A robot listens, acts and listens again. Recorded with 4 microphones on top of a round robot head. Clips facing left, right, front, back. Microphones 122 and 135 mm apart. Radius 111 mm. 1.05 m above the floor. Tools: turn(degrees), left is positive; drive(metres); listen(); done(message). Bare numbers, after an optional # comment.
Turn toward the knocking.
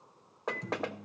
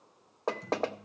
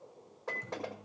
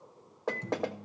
# The knocking: 145° right.
turn(-145)
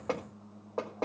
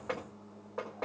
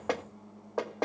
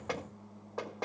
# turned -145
# The knocking is now 30° left.
turn(30)
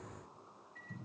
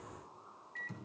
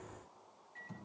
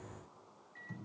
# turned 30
listen()
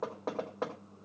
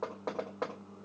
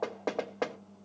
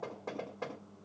done("Found it: knocking, straight ahead, 1 to 2 m away.")